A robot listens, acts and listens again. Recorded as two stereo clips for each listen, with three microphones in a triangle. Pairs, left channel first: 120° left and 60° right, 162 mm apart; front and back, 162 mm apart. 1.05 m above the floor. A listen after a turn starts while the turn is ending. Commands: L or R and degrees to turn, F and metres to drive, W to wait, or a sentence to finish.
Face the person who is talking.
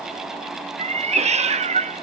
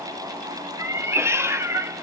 W
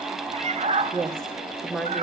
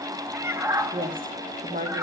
R155
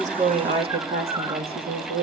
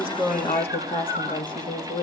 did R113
R65
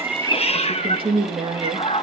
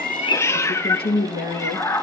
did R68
Facing the woman speaking, 2 to 4 m away.